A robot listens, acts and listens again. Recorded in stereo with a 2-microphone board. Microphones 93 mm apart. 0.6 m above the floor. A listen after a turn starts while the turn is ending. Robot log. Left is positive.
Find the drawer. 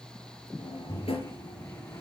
cmd yaw +90
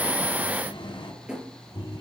note: So it is at 10° right.
cmd yaw -10
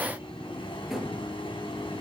end: Found it: a drawer, straight ahead.